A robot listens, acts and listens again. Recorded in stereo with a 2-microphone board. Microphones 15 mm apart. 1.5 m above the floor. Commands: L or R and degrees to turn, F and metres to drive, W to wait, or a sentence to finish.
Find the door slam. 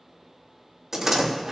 R35
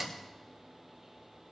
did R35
Facing the door slam, 2 to 4 m away.